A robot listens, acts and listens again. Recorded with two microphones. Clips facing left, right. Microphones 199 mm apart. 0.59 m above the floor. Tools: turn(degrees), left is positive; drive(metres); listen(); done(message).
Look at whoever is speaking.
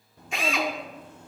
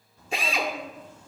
turn(degrees=60)
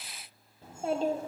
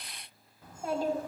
turn(degrees=30)
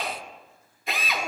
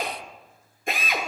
listen()
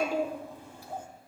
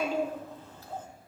turn(degrees=15)
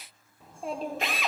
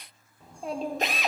done("Found it: a child speaking, straight ahead.")